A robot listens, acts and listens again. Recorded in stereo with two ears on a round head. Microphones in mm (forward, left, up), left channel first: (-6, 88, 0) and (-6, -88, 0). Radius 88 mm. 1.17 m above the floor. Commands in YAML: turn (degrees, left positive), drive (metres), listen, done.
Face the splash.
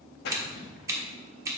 turn: 55
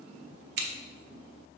listen: true
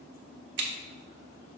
done: "I heard a splash, but can't make it out now. It was about straight ahead or 70° left."